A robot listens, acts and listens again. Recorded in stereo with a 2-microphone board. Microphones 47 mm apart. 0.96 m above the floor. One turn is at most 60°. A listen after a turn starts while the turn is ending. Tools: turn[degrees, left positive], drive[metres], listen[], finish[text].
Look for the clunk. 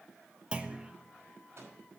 Thought: The clunk: about 20° right or 160° right.
Action: turn[-20]
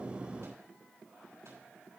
Action: listen[]
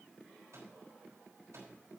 Action: finish[I heard a clunk, but can't make it out now. It was about straight ahead or 140° right.]